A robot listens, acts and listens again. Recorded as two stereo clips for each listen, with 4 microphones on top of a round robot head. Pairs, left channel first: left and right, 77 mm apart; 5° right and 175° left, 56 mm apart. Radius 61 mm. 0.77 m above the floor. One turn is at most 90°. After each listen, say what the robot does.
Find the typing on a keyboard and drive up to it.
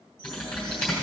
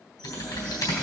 Turn 10° left.
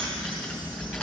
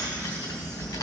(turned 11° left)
Drive 1.0 m forward.
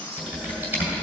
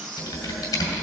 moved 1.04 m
Turn 15° right.
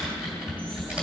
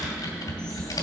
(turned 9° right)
Turn 10° right.
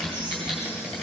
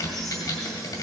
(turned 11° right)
Drive 1.0 m forward.
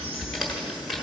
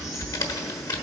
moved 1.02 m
Drive 1.0 m forward.
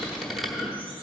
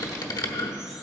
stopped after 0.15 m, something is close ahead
Arrived at the typing on a keyboard, straight ahead.